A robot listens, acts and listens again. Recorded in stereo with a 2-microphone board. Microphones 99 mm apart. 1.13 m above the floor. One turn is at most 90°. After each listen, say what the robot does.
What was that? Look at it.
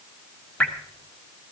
Turn 15° left.
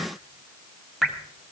Facing the dripping, 1 to 2 m away.